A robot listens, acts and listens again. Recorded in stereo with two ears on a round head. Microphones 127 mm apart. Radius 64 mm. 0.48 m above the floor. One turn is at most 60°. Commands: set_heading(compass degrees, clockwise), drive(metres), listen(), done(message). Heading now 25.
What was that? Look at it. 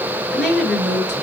set_heading(355)
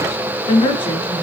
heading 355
set_heading(295)
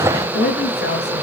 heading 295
set_heading(235)
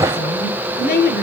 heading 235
set_heading(175)
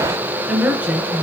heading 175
set_heading(185)
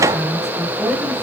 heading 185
done("Found it: a woman speaking, straight ahead, over 4 m away.")